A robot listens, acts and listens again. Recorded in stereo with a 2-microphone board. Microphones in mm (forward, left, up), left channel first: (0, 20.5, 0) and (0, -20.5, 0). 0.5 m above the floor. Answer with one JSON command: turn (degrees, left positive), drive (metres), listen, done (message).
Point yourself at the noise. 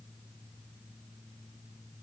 {"listen": true}
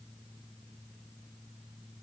{"listen": true}
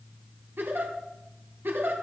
{"turn": -60}
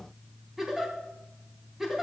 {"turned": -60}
{"done": "Facing the giggle, 2 to 4 m away."}